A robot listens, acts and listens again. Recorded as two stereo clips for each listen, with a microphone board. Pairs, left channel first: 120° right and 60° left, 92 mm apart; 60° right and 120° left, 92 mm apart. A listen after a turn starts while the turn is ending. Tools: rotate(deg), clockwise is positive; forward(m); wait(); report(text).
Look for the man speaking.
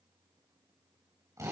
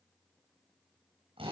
wait()
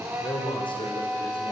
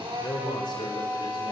rotate(95)
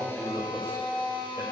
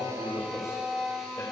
wait()
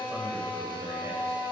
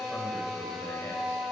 report("Facing the man speaking, over 4 m away.")